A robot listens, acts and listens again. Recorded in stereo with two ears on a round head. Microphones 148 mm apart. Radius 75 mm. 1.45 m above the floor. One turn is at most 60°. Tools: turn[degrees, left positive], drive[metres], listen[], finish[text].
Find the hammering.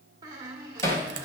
Thought: The hammering: about 20° left or 160° left.
Action: turn[20]
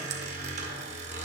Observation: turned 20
Action: listen[]
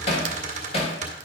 Thought: So it is at 140° left.
Action: turn[60]
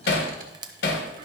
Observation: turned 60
Thought: The hammering is now 75° left.
Action: turn[60]
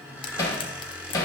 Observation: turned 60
Thought: The hammering is now 20° left.
Action: turn[20]
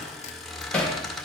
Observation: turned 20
Action: finish[Found it: hammering, straight ahead.]